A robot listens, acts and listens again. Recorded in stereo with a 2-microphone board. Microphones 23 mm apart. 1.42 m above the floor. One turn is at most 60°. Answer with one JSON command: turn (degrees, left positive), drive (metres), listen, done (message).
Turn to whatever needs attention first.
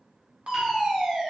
{"turn": -55}
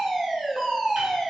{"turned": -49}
{"turn": -20}
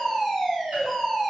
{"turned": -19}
{"done": "Found it: a fire alarm, straight ahead."}